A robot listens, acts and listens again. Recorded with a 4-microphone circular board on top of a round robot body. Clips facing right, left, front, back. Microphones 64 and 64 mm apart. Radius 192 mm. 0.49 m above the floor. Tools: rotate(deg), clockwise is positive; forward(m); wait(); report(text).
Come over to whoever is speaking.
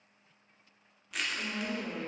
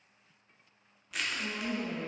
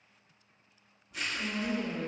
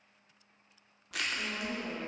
rotate(130)
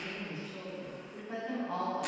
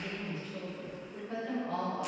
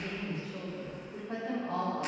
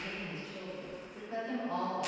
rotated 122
rotate(10)
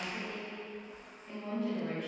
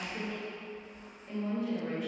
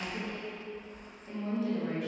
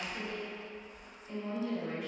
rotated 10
forward(1.0)
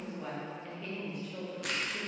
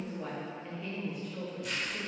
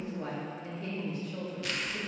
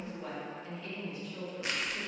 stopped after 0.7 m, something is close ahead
report("I am next to the woman speaking.")